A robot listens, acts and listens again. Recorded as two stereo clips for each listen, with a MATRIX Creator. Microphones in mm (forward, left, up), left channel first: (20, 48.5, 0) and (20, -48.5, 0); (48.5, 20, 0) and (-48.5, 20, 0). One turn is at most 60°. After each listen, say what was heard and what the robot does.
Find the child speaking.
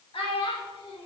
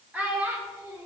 The child speaking: 115° left. Turn 60° left.
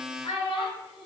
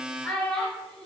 The child speaking is now 85° left. Turn 60° left.
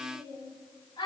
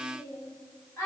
The child speaking is now 60° left. Turn 60° left.
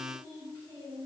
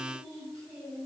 The child speaking is now 25° left. Turn 25° left.
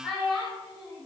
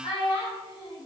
Found it: a child speaking, straight ahead, 2 to 4 m away.